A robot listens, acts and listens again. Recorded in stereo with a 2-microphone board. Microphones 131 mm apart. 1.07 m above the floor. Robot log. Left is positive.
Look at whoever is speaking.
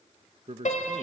note: The man speaking: about 50° right or 130° right.
cmd yaw -50
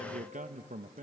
note: So it is at 80° right.
cmd yaw -80
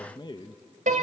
note: The man speaking is now 35° left.
cmd yaw +35
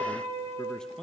cmd idle
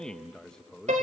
end: Facing the man speaking, under 1 m away.